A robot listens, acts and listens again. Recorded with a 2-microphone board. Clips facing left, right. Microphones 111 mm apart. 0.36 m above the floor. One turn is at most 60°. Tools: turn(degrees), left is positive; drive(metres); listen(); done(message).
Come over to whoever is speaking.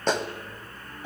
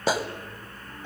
listen()
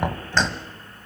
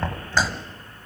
listen()
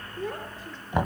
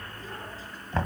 turn(degrees=60)
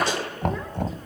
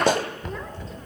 listen()
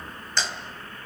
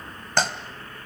listen()
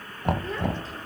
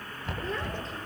done("I heard a child speaking, but can't make it out now. It was about straight ahead or 60° left. I did not reach it.")